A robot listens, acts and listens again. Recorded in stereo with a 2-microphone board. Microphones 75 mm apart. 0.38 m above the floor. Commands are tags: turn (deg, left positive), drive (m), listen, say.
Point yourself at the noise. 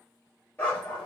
<turn deg="20"/>
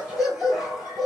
<say>Found it: a dog barking, straight ahead, 2 to 4 m away.</say>